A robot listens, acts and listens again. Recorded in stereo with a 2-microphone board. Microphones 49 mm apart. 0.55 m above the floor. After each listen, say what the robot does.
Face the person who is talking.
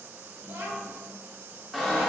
Turn 55° right.
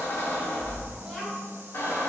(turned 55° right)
Turn 10° right.
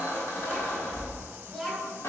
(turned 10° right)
Facing the child speaking.